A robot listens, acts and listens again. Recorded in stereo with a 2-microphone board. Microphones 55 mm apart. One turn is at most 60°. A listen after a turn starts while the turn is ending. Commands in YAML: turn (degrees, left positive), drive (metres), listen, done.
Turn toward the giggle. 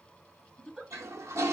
turn: -30
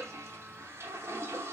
listen: true
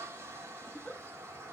turn: 20
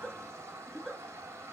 done: "Facing the giggle."